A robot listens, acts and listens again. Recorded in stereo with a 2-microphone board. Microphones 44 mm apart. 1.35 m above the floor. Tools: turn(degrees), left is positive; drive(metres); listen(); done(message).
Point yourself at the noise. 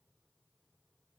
listen()
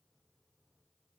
listen()
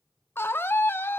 turn(degrees=60)
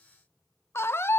turn(degrees=60)
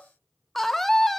done("Facing the scream.")